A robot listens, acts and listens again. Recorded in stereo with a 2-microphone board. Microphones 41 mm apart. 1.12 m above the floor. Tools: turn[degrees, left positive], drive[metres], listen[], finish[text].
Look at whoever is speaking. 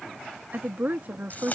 Thought: The woman speaking: about 50° right or 130° right.
Action: turn[-50]
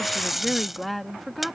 Action: finish[Facing the woman speaking.]